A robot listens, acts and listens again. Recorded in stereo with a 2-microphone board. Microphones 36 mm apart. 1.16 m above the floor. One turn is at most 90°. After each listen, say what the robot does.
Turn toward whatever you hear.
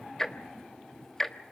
Turn 30° left.
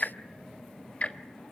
Turn 90° left.
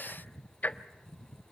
Turn 55° left.
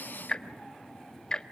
Turn 25° left.
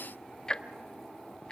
Turn 25° left.
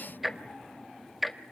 Facing the ticking, 1 to 2 m away.